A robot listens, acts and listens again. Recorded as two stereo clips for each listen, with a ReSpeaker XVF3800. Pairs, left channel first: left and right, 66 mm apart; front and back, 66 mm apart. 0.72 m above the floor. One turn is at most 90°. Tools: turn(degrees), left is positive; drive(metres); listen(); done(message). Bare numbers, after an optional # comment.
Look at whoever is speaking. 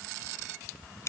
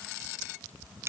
listen()
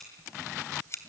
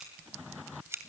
listen()
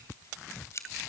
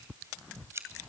done("I can't make out anyone speaking, only scissors.")